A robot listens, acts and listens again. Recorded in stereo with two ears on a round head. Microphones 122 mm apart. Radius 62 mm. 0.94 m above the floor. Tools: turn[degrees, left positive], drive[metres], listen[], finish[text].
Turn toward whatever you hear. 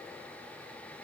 Action: listen[]
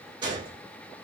Thought: The gunshot: about 35° right or 145° right.
Action: turn[-35]
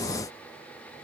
Action: listen[]
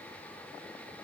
Action: finish[I heard a gunshot, but can't make it out now. It was about straight ahead or 110° right.]